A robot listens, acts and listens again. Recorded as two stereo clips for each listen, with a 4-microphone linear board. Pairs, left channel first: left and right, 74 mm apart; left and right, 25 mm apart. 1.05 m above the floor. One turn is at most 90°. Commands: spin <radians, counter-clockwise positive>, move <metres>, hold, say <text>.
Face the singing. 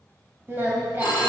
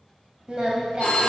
spin -0.44
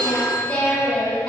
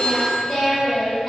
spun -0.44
spin 0.26
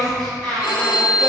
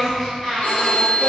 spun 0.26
spin 0.17
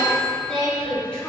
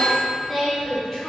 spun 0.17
spin 0.17
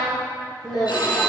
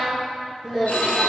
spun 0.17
say Found it: singing, straight ahead.